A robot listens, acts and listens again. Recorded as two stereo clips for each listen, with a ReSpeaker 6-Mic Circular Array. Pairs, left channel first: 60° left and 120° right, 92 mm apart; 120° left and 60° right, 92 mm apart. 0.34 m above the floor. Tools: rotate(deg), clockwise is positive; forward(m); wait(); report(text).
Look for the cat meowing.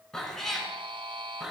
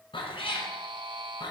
rotate(-155)
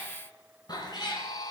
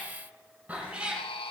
rotate(-20)
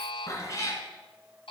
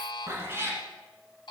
report("Facing the cat meowing.")